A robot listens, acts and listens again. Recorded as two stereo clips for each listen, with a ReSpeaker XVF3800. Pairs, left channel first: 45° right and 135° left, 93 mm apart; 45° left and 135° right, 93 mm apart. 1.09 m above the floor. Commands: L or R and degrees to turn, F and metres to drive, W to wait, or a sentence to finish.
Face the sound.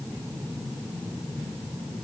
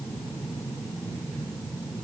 W
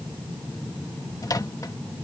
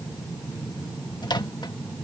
Facing the microwave.